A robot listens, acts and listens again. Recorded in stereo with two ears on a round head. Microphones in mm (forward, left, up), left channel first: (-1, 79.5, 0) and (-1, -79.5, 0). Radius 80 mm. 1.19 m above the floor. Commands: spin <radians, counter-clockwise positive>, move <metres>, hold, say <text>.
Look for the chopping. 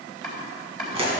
spin 0.52
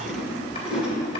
hold
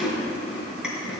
hold
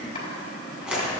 say I heard chopping, but can't make it out now. It was about 30° right or 150° left.